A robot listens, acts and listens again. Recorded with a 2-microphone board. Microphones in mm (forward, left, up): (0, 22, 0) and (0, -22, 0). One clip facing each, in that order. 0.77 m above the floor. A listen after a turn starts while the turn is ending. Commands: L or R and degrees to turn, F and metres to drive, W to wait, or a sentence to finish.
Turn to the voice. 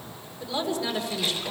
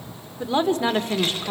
R50
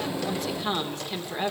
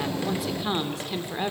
Found it: a woman speaking, straight ahead, 2 to 4 m away.